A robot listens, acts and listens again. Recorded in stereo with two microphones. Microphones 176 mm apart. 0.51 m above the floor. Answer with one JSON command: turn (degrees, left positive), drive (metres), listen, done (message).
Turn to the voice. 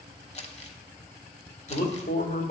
{"turn": 55}
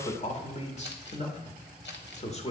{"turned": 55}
{"turn": 45}
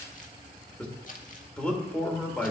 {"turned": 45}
{"done": "Facing the man speaking."}